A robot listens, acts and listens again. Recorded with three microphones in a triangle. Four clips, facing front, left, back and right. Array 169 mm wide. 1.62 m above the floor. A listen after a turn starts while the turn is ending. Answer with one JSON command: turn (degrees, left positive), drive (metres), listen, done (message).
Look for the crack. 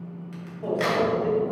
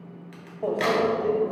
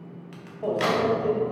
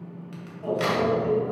{"turn": 160}
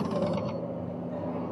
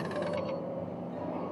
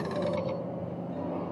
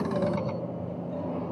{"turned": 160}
{"done": "Facing where the crack came from. I can't hear it now."}